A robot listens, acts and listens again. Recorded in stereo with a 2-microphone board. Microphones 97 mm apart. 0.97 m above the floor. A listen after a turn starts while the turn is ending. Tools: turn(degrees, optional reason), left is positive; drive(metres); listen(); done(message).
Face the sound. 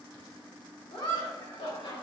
turn(degrees=90)
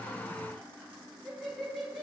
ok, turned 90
done("Found it: laughter, straight ahead.")